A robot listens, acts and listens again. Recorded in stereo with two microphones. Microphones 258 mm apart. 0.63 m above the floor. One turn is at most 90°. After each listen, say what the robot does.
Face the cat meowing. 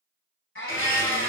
Turn 55° left.
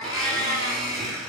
Turn 65° left.
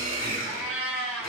Turn 10° right.
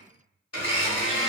Keep listening.
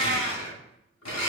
Keep listening.
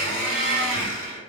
I heard a cat meowing from this way, but can't make it out now.